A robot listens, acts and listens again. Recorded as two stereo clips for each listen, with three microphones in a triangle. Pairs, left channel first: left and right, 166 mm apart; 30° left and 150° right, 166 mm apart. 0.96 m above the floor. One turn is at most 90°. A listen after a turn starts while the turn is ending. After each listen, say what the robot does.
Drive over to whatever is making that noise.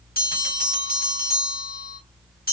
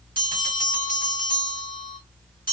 Turn 60° left.
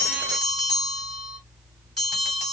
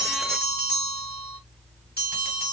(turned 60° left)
Drive 1.0 m forward.
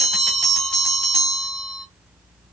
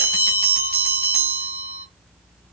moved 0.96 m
Drive 1.0 m forward.
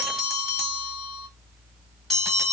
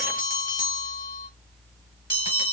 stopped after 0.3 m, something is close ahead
Arrived at the bell, straight ahead.